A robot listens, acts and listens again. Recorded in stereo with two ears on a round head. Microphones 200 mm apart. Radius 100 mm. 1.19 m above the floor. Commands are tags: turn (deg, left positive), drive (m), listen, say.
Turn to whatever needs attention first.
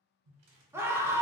<turn deg="-30"/>
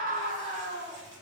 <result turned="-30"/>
<turn deg="-140"/>
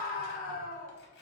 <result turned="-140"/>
<turn deg="40"/>
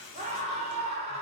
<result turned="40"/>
<turn deg="-30"/>
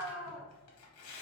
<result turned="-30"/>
<say>Facing the scream, under 1 m away.</say>